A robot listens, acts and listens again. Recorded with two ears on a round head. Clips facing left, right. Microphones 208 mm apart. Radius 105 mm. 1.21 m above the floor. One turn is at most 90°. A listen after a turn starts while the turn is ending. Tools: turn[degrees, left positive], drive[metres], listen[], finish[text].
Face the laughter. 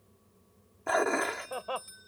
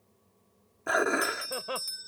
Thought: The laughter: about 30° right or 150° right.
Action: turn[-30]
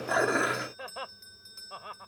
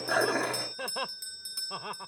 Thought: So it is at 115° right.
Action: turn[-90]
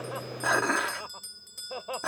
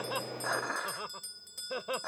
Thought: The laughter is now 25° right.
Action: turn[-25]
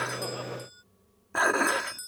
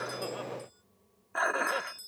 Action: listen[]
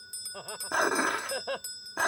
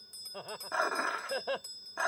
Action: finish[Facing the laughter.]